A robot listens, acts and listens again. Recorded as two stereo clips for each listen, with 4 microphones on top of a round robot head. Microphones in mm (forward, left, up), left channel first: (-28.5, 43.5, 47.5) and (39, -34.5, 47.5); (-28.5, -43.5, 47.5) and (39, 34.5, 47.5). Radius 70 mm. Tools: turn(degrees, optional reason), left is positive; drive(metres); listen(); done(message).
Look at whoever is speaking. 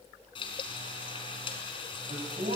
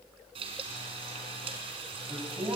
turn(degrees=-20, reason="The man speaking: 20° right.")
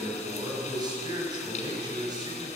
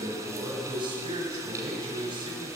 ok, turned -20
done("Found it: a man speaking, straight ahead.")